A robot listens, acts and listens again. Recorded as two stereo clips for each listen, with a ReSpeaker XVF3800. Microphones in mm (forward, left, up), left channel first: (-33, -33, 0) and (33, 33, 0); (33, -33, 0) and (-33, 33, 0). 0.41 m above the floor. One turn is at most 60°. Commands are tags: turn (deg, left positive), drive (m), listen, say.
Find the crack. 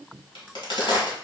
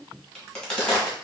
<turn deg="-60"/>
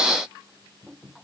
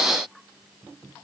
<turn deg="-60"/>
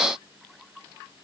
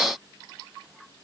<say>I heard a crack from this way, but can't make it out now.</say>